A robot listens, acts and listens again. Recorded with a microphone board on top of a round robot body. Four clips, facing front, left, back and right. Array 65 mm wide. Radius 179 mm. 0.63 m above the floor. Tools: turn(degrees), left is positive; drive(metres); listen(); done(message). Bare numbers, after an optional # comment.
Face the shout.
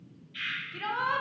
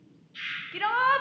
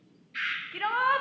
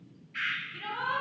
# The shout: 115° left.
turn(115)
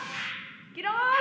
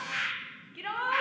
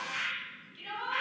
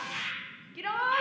done("Found it: a shout, straight ahead.")